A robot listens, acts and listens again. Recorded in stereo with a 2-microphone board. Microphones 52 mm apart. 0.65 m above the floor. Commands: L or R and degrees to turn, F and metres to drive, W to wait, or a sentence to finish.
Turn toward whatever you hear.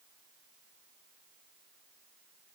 W
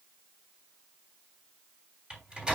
R15
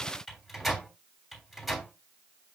Found it: a microwave, straight ahead.